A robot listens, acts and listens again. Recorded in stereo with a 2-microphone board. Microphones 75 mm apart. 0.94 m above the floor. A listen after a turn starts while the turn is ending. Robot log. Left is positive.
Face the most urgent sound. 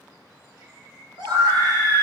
cmd yaw -90
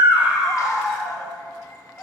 end: Facing the scream.